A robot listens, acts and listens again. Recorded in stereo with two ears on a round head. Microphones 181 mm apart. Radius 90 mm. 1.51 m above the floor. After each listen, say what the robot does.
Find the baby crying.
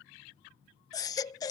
Turn 20° left.
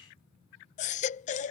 Turn 140° left.
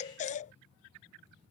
Turn 40° left.
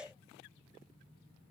Facing the baby crying.